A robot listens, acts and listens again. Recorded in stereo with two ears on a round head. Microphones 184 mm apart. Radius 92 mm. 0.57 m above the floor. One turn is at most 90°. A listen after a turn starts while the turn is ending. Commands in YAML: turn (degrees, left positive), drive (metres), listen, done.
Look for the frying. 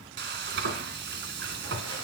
turn: -60
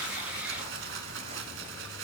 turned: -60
turn: -65
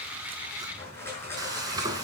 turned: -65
turn: -20
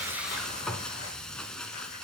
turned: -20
done: "Facing the frying."